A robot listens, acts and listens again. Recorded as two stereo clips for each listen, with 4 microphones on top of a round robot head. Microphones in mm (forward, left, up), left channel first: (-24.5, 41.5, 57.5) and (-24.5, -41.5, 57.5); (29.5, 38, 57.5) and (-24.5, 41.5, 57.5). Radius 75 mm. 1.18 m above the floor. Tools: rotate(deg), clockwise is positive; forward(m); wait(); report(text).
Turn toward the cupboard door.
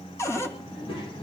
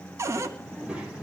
rotate(-145)
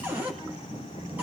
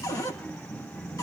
rotate(20)
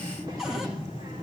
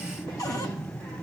report("Facing the cupboard door, 2 to 4 m away.")